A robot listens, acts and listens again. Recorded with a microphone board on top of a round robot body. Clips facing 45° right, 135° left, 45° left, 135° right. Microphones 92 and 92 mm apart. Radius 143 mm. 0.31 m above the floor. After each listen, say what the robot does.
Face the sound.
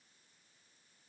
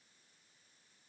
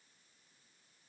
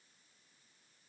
Keep listening.
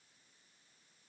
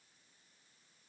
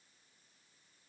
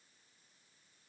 Keep listening.
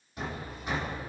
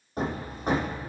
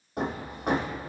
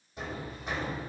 Turn 85° left.
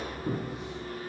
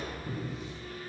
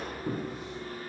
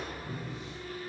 Facing the hammering.